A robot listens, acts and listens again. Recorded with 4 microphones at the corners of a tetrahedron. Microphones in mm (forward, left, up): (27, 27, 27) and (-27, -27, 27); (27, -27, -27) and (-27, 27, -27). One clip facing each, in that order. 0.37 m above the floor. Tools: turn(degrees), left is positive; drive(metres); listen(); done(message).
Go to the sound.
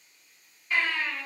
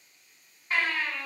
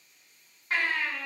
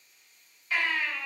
turn(degrees=-80)
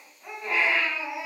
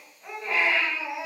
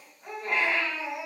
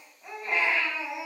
turn(degrees=-10)
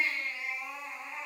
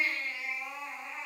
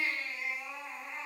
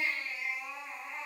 drive(metres=1.0)
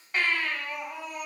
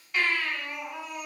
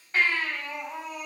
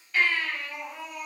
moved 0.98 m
drive(metres=1.0)
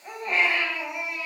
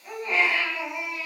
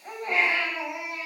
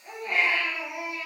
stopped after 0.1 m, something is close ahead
done("I am next to the baby crying.")